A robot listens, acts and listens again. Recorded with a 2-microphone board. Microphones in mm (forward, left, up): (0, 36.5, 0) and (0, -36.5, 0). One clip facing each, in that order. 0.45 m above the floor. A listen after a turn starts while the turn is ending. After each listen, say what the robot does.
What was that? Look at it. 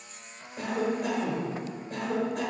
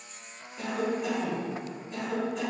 Turn 60° left.
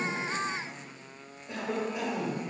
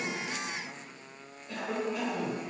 Turn 30° left.
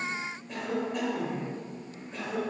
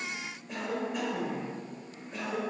Facing the cough, 1 to 2 m away.